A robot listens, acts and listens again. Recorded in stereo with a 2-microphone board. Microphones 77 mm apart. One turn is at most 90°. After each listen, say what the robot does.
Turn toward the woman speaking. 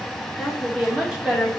Turn 30° right.
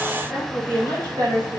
Turn 90° right.
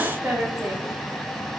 Turn 20° right.
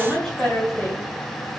Found it: a woman speaking, straight ahead, 2 to 4 m away.